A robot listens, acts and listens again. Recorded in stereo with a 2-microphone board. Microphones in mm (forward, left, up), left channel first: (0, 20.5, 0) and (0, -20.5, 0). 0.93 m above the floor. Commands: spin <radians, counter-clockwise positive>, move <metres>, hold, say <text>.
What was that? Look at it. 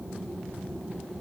hold
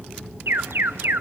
spin -1.13
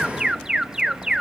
spin -0.26
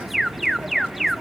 say Facing the alarm, under 1 m away.